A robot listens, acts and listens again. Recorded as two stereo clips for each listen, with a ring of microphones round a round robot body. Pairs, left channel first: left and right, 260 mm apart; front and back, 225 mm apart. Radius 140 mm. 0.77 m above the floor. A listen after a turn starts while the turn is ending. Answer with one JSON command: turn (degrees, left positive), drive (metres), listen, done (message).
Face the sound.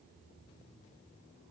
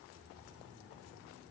{"listen": true}
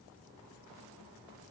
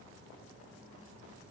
{"listen": true}
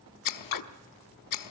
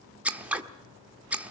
{"turn": 95}
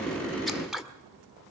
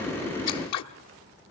{"done": "Found it: scissors, straight ahead, 1 to 2 m away."}